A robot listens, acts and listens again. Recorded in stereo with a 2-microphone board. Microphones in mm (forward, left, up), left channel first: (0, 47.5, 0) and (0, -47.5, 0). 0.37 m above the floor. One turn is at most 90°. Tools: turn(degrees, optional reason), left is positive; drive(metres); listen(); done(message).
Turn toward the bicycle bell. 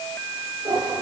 listen()
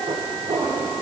listen()
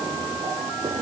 done("I can't make out a bicycle bell to turn to.")